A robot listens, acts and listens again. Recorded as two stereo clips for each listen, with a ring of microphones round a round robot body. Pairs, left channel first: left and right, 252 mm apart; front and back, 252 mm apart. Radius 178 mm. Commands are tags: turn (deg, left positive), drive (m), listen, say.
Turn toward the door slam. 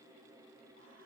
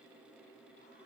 <listen/>
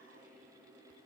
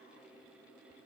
<listen/>
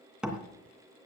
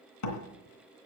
<say>Found it: a door slam, straight ahead, 2 to 4 m away.</say>